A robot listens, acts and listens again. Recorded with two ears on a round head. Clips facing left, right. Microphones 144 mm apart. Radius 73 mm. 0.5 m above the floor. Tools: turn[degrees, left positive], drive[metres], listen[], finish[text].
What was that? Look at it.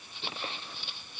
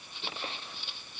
Action: listen[]
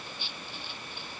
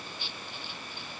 Action: listen[]
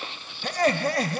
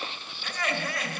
Thought: The laughter: about 35° left or 145° left.
Action: turn[35]
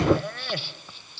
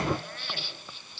Thought: So it is at 110° left.
Action: turn[110]
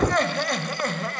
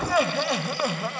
Action: finish[Found it: laughter, straight ahead, 2 to 4 m away.]